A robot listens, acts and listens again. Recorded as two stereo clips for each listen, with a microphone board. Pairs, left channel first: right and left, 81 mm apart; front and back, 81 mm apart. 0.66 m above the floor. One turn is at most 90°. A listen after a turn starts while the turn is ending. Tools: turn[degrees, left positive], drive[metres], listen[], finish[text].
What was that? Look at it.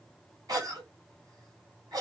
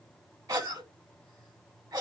Thought: The cough: 135° left.
Action: turn[90]
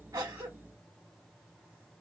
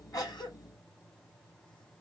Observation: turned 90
Thought: Nothing new. It was at 45° left.
Action: turn[45]
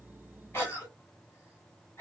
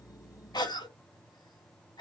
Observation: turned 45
Thought: The cough is now 30° right.
Action: turn[-30]
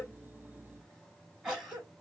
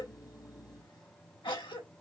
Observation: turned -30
Action: finish[Facing the cough, 2 to 4 m away.]